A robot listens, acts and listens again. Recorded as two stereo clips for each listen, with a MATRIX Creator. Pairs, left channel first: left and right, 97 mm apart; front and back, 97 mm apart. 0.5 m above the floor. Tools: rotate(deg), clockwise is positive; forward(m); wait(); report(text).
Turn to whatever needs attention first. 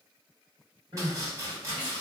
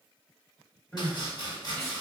rotate(75)
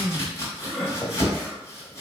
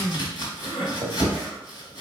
report("Found it: crying, straight ahead.")